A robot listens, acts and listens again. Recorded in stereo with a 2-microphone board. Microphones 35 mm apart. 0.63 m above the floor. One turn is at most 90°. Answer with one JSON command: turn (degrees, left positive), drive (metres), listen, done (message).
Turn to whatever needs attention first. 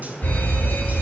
{"turn": 65}
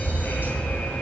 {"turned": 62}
{"turn": 45}
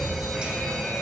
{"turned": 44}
{"done": "Facing the alarm, over 4 m away."}